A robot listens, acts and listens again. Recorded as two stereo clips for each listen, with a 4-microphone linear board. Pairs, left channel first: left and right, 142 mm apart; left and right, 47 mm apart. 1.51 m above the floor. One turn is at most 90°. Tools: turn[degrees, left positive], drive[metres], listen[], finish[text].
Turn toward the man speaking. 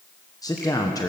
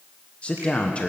Thought: The man speaking: about 25° left or 155° left.
Action: turn[25]
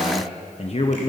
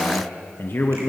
Thought: So it is at 130° left.
Action: turn[90]
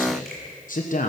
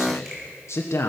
Thought: The man speaking is now 70° left.
Action: turn[70]
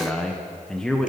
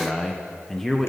Action: finish[Found it: a man speaking, straight ahead.]